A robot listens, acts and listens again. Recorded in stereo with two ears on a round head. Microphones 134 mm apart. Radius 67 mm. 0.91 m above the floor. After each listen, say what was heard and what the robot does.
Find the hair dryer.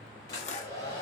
The hair dryer: about 25° left or 155° left. Turn 25° left.
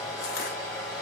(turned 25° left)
Found it: a hair dryer, straight ahead.